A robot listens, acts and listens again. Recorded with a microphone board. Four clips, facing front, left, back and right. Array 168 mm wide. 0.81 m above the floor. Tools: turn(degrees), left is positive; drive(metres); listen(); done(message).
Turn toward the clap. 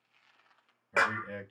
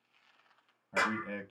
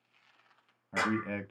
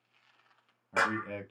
turn(degrees=-25)
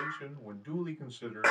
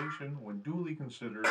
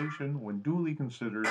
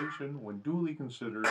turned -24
done("Facing the clap, under 1 m away.")